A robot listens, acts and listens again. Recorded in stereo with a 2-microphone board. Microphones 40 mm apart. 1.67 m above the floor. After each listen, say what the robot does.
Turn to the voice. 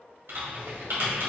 Keep listening.
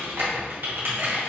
Keep listening.
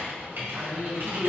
Turn 35° right.
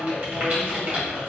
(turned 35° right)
Turn 110° right.
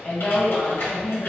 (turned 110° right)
Turn 15° left.
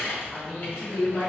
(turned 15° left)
Facing the woman speaking.